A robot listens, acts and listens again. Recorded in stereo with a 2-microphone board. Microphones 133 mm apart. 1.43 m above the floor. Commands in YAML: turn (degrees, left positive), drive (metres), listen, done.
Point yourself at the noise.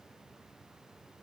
listen: true
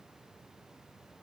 listen: true
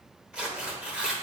turn: -30
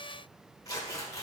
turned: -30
turn: 25
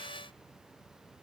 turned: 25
listen: true
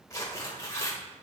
turn: 20
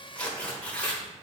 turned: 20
turn: 10
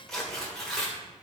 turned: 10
done: "Found it: tearing paper, straight ahead."